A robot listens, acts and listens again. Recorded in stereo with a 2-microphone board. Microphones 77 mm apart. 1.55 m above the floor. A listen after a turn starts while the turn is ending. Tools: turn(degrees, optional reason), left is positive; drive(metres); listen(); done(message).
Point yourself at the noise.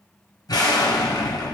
turn(degrees=55, reason="The explosion: about 55° left or 125° left.")
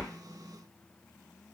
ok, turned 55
listen()
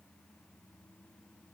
done("I heard an explosion, but can't make it out now. It was about straight ahead or 70° left.")